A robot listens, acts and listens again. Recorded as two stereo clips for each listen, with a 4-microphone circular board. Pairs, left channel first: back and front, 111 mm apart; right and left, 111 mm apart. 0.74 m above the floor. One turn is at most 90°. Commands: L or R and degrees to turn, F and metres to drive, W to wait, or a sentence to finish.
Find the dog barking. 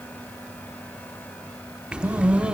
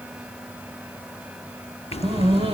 L75
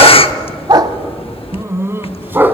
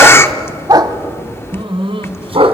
L70
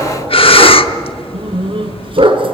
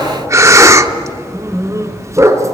L30
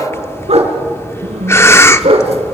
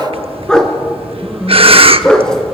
Found it: a dog barking, straight ahead, 2 to 4 m away.